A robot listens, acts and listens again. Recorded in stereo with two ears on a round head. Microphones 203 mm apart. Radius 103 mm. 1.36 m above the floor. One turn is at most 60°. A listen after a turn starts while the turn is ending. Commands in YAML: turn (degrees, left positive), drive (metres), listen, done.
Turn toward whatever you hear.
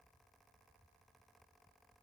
listen: true
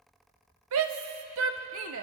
turn: -60
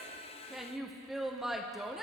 done: "Found it: a shout, straight ahead."